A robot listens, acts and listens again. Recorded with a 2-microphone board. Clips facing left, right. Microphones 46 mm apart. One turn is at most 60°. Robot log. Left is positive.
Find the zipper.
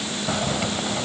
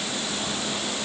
note: The zipper: about 60° left or 120° left.
cmd yaw +60
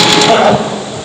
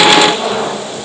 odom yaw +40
note: So it is at 65° left.
cmd yaw +60
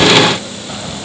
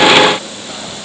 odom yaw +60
note: The zipper is now 10° left.
cmd yaw +10
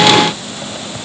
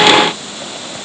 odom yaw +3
cmd idle
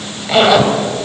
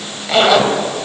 end: Facing the zipper, 2 to 4 m away.